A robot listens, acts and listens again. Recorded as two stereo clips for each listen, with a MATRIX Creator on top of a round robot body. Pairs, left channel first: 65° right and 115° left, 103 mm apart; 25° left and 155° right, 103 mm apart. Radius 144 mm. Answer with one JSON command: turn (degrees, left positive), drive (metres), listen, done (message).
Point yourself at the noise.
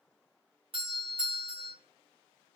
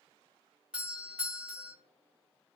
{"turn": 125}
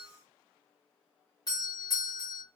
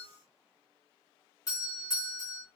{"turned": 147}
{"turn": -25}
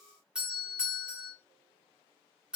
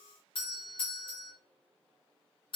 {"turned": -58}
{"turn": 30}
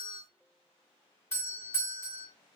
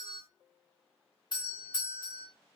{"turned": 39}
{"turn": -10}
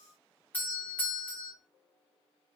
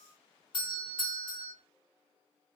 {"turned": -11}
{"done": "Found it: a doorbell, straight ahead, 2 to 4 m away."}